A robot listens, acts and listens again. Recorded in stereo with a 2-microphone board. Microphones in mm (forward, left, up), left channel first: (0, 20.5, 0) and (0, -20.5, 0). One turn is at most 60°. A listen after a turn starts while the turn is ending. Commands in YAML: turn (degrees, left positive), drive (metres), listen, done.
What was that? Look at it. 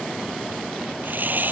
turn: -50
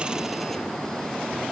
listen: true
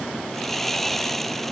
done: "Facing the sawing."